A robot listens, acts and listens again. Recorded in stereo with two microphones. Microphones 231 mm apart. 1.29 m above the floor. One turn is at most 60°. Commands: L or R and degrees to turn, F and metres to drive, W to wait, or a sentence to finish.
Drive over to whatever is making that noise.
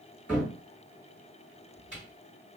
R30
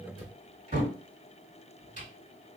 R60
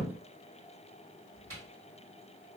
R60
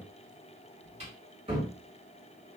R25
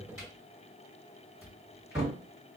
R15
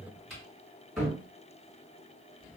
F1.0
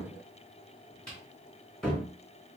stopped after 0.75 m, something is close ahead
Arrived at the cupboard door, straight ahead.